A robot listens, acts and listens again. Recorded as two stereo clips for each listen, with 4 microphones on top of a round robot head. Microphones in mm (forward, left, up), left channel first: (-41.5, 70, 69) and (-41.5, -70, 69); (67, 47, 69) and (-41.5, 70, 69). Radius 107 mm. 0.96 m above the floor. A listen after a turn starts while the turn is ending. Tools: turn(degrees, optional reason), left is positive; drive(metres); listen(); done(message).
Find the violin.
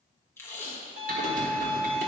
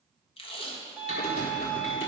turn(degrees=-95, reason="The violin: 95° right.")
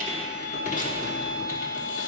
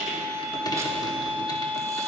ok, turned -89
done("Facing the violin, 1 to 2 m away.")